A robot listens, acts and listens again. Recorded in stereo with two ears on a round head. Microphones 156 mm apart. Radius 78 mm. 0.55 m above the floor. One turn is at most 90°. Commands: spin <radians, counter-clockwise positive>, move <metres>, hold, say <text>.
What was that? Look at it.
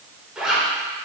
spin -0.52
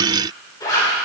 spin 0.44
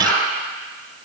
spin 0.17
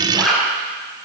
say Facing the zipper, 1 to 2 m away.